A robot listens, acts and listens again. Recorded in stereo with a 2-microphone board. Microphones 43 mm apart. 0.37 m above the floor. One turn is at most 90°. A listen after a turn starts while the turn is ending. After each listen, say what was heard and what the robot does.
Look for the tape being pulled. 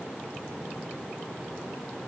Keep listening.
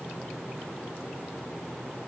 Keep listening.
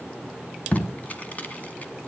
The tape being pulled: about 35° left or 145° left. Turn 35° left.
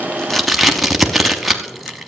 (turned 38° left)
Found it: tape being pulled, straight ahead.